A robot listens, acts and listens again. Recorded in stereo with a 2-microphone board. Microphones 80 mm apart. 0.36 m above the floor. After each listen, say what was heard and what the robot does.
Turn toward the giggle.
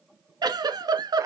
The giggle: about 60° right or 120° right. Turn 60° right.
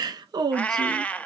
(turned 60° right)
So it is at 60° right. Turn 60° right.
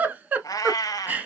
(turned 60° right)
The giggle is now 20° right. Turn 20° right.
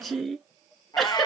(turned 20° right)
Facing the giggle, 1 to 2 m away.